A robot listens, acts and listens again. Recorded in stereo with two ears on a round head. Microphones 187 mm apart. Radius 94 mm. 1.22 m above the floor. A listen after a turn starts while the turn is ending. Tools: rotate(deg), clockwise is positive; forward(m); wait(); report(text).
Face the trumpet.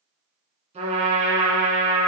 rotate(30)
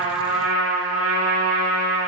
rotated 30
report("Facing the trumpet, 2 to 4 m away.")